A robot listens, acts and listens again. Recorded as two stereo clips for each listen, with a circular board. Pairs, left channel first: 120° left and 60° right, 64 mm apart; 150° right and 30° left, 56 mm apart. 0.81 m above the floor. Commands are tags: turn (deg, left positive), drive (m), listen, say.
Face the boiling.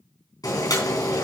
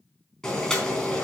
<turn deg="130"/>
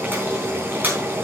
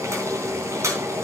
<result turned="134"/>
<say>Facing the boiling, 2 to 4 m away.</say>